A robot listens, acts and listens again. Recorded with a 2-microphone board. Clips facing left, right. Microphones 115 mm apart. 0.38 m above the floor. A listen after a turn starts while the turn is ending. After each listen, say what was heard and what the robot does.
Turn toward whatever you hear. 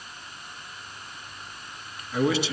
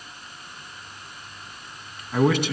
The man speaking: about 55° right or 125° right. Turn 55° right.
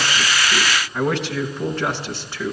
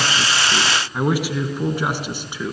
So it is at 15° right. Turn 15° right.
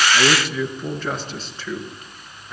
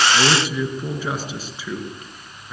The man speaking is now 10° right. Turn 10° right.
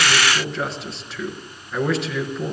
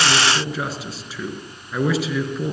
Found it: a man speaking, straight ahead.